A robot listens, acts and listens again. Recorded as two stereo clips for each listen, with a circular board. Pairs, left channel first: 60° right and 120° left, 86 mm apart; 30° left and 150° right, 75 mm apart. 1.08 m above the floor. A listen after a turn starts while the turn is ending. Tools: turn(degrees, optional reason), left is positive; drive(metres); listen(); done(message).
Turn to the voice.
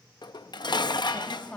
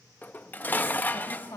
turn(degrees=15, reason="The woman speaking: 15° left.")
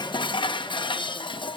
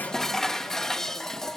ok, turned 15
listen()
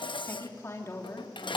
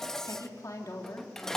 done("Facing the woman speaking, 2 to 4 m away.")